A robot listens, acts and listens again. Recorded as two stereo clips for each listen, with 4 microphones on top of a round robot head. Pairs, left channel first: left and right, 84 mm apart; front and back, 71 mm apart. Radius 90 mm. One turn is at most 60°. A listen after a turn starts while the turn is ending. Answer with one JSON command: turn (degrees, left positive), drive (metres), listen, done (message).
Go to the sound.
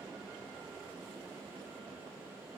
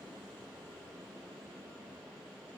{"listen": true}
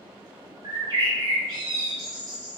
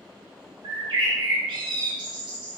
{"turn": -60}
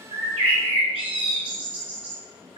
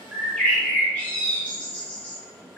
{"turn": -60}
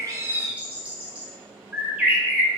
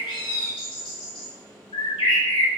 {"turn": -15}
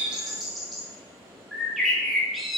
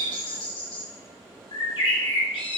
{"drive": 1.0}
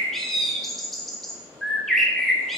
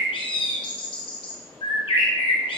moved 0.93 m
{"drive": 1.0}
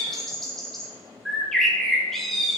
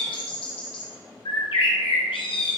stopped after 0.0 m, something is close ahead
{"done": "Arrived at the bird, straight ahead."}